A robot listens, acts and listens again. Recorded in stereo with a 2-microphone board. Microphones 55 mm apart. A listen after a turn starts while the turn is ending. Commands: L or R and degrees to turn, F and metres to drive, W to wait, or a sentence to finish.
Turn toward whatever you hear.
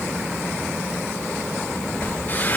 L35
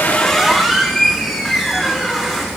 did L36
Facing the squeak, over 4 m away.